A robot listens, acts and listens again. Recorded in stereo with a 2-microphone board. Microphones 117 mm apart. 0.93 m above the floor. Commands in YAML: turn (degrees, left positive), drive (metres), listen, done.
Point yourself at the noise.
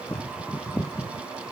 listen: true
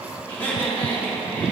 turn: 30
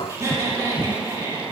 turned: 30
turn: -35
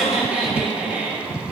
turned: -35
turn: -15
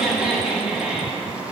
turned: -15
done: "Facing the laughter, 2 to 4 m away."